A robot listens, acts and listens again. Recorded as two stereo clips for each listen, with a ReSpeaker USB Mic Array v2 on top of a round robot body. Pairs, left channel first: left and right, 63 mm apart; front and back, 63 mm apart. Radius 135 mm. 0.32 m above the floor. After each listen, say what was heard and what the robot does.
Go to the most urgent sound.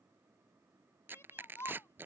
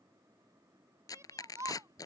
The shout: 140° left. Turn 140° left.
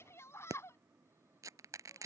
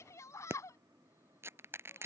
The shout is now 40° left. Turn 40° left.
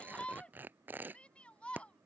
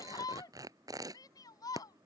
The shout is now 20° left. Turn 20° left.
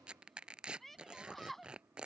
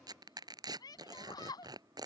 Drive 1.0 m forward.
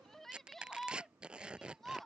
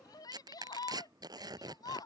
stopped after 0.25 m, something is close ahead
Blocked. The shout is further on, straight ahead.